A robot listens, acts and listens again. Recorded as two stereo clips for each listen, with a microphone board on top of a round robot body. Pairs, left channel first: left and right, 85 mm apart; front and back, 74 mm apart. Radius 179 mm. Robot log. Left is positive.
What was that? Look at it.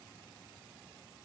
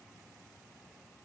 cmd idle
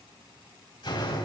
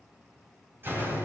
note: The door slam: 120° left.
cmd yaw +120
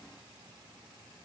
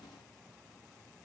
end: Facing where the door slam came from. I can't hear it now.